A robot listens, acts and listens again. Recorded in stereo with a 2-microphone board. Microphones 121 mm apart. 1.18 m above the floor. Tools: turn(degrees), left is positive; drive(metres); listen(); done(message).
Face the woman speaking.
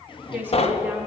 turn(degrees=-30)
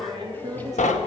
turn(degrees=-150)
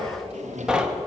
listen()
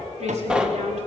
turn(degrees=-70)
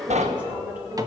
turn(degrees=-15)
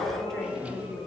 done("Found it: a woman speaking, straight ahead.")